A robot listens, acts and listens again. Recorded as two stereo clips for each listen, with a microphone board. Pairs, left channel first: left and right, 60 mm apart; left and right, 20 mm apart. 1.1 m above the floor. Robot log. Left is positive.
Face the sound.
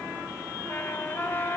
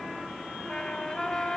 note: The trumpet: about 35° left or 145° left.
cmd yaw +35
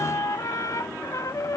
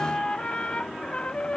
note: So it is at 110° left.
cmd yaw +110
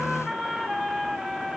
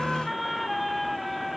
end: Facing the trumpet.